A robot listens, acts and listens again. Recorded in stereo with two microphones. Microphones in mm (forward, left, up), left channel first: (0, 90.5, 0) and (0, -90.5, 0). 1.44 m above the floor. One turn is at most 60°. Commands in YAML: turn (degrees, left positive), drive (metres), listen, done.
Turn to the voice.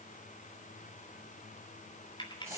listen: true
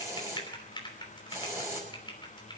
listen: true
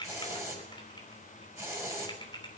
done: "I can't make out anyone speaking to turn to."